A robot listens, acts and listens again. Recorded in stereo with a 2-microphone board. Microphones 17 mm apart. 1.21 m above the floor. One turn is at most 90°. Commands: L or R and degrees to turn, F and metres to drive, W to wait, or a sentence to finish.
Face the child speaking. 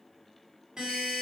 W
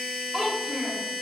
R30
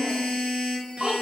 R90
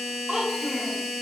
R35
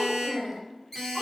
R15
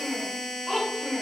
Found it: a child speaking, straight ahead, 2 to 4 m away.